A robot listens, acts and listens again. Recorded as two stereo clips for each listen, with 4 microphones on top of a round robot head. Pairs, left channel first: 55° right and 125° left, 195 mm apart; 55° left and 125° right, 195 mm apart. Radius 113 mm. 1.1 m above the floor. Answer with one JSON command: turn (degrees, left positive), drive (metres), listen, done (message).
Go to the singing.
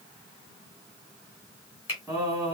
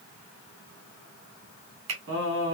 {"turn": -160}
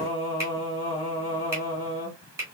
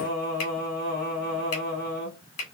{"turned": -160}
{"turn": 10}
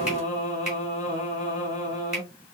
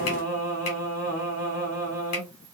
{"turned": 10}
{"drive": 1.0}
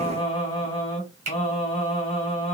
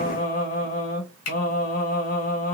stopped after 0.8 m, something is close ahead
{"turn": 10}
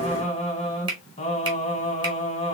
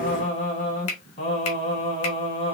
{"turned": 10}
{"done": "Arrived at the singing, straight ahead."}